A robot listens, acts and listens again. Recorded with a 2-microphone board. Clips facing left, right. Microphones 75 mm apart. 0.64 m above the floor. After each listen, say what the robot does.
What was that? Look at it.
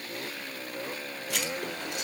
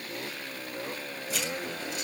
Turn 70° left.
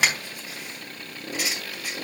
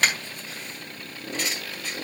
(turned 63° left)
Turn 10° left.
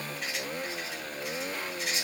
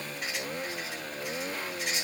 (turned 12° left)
Found it: writing, straight ahead.